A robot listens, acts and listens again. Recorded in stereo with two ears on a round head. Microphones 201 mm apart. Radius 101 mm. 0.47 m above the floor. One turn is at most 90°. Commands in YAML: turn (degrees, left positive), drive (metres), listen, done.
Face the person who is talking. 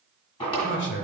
turn: 55
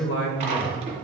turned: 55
turn: 60
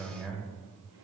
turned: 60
done: "Facing the man speaking."